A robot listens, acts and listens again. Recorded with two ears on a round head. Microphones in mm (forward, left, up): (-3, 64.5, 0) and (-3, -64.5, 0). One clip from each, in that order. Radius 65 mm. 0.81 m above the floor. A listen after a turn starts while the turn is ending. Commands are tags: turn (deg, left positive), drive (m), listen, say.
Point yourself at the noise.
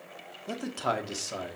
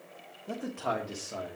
<turn deg="65"/>
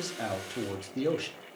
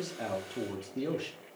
<turn deg="35"/>
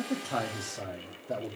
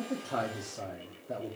<turn deg="25"/>
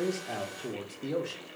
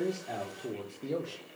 <turn deg="10"/>
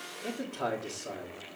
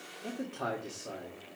<say>Facing the man speaking, 1 to 2 m away.</say>